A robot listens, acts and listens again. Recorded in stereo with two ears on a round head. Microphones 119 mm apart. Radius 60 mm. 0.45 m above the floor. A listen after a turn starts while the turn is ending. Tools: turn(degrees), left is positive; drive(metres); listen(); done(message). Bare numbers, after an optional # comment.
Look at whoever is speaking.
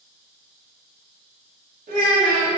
# The child speaking: about 70° right or 110° right.
turn(-70)
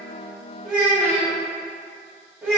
# So it is at 10° right.
turn(-10)
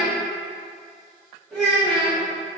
done("Facing the child speaking.")